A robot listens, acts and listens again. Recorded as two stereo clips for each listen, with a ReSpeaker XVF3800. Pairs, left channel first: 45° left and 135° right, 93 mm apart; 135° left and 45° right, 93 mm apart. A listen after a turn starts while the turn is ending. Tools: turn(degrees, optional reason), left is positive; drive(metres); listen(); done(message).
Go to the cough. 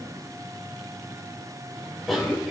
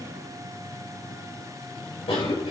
turn(degrees=135, reason="The cough: 135° left.")
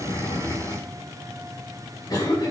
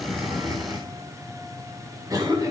drive(metres=1.0)
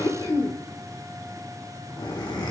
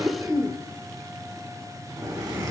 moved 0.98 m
turn(degrees=10, reason="The cough is now 10° left.")
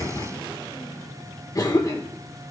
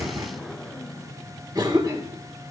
drive(metres=1.0)
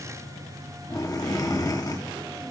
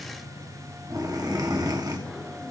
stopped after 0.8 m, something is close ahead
done("I am next to the cough.")